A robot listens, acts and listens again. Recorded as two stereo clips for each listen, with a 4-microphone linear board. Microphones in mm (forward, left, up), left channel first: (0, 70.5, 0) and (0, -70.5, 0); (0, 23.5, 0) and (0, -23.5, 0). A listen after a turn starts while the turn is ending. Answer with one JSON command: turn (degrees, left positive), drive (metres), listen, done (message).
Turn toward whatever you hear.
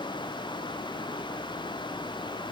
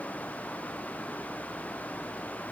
{"listen": true}
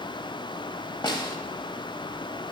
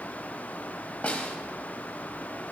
{"turn": 30}
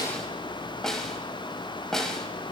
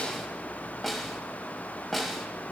{"done": "Found it: a snare drum, straight ahead, under 1 m away."}